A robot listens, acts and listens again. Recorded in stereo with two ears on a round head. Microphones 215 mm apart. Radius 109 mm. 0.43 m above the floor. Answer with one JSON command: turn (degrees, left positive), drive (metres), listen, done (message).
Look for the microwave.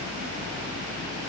{"listen": true}
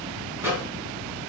{"turn": -30}
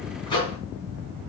{"turn": 20}
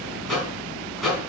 {"done": "Found it: a microwave, straight ahead, 2 to 4 m away."}